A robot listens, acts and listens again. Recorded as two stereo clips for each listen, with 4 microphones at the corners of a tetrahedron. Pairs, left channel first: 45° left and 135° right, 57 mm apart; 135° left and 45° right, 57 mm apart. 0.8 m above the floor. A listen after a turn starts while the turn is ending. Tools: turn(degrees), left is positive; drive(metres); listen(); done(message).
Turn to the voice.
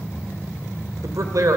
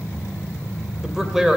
turn(degrees=-125)
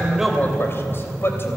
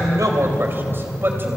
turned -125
done("Found it: a man speaking, straight ahead.")